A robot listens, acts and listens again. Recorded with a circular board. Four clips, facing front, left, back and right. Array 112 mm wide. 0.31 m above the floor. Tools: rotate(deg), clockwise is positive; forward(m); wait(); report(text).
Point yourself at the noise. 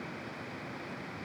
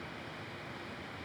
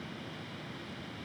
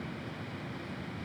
wait()
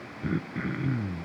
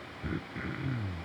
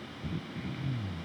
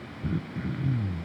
rotate(-15)
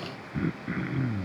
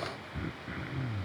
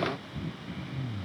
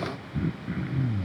report("Facing the throat clearing.")